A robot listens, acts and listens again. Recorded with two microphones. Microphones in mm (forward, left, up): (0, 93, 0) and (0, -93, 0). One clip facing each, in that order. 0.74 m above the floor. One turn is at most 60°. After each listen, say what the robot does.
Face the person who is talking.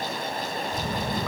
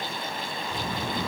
Turn 50° right.
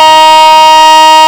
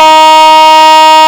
Keep listening.
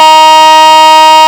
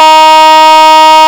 Keep listening.
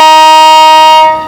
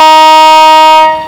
Turn 40° right.
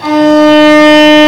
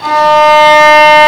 Keep listening.
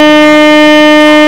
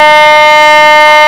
Keep listening.
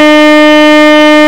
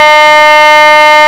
Facing where the child speaking came from. I can't hear it now.